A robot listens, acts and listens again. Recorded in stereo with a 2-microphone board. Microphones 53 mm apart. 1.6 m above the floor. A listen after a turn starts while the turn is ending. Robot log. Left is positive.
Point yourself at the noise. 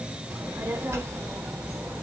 note: The child speaking: about 60° right or 120° right.
cmd yaw -60
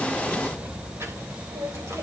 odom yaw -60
note: So it is at 55° right.
cmd yaw -55
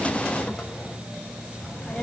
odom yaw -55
end: Facing the child speaking.